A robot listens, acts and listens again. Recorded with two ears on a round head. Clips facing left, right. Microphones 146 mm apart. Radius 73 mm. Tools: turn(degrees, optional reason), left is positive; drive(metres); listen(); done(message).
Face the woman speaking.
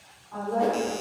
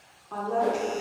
turn(degrees=-90)
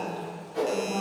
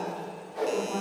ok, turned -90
turn(degrees=15, reason="So it is at 15° left.")
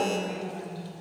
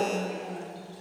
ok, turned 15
done("Facing the woman speaking, 1 to 2 m away.")